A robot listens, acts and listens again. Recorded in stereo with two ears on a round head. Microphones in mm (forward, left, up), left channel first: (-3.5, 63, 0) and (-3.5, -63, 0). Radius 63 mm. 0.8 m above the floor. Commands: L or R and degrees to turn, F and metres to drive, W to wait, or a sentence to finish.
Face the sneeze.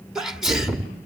R30
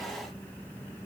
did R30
W
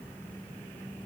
I heard a sneeze, but can't make it out now. It was about 25° left or 145° right.